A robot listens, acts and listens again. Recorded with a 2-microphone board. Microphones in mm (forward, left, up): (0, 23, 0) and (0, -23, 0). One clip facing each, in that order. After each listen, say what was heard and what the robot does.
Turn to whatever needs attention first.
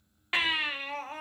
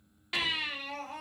The baby crying: about 30° left or 150° left. Turn 30° left.
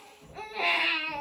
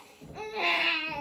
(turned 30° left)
Facing the baby crying.